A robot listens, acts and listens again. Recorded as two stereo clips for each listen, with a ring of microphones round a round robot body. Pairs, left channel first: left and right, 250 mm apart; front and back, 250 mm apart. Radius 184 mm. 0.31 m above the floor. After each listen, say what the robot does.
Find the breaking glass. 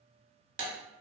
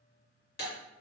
Turn 55° right.
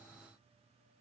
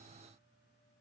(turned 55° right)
I heard breaking glass from this way, but can't make it out now.